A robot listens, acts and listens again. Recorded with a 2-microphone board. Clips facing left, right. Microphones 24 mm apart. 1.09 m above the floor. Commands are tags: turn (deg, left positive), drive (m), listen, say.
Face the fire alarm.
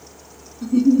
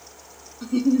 <listen/>
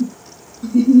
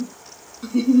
<listen/>
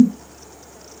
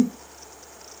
<say>I can't make out a fire alarm to turn to.</say>